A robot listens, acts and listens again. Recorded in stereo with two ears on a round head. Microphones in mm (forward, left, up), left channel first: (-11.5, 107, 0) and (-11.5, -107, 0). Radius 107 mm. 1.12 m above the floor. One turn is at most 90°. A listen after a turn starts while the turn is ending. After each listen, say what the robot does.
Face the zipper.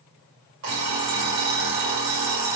Keep listening.
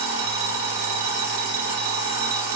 Keep listening.
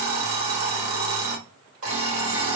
I can't make out a zipper to turn to.